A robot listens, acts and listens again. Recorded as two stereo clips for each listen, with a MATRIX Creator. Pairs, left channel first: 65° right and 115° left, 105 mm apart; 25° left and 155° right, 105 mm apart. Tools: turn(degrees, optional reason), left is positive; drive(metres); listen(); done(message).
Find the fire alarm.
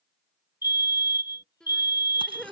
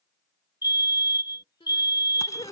turn(degrees=-20, reason="The fire alarm: 20° right.")
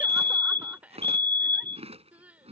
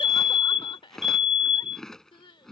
done("Found it: a fire alarm, straight ahead.")